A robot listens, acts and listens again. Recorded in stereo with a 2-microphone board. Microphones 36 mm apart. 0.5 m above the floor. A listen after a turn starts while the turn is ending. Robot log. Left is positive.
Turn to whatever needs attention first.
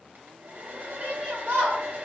note: The shout: about 45° right or 135° right.
cmd yaw -45
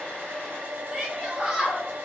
note: So it is at 15° right.
cmd yaw -15
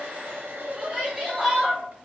end: Facing the shout, 1 to 2 m away.